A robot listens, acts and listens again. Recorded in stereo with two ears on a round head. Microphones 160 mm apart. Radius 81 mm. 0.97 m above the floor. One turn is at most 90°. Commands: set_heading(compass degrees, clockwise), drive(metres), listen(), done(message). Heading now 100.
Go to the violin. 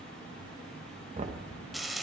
listen()
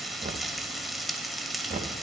listen()
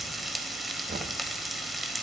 done("I can't make out a violin to turn to.")